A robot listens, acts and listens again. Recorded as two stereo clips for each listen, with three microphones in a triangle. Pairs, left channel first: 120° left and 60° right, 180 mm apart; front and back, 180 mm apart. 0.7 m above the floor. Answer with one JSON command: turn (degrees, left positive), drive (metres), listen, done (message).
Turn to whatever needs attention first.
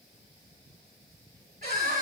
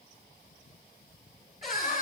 {"turn": -30}
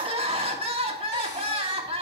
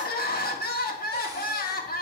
{"turn": -10}
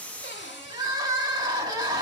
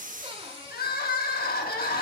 {"done": "Found it: crying, straight ahead."}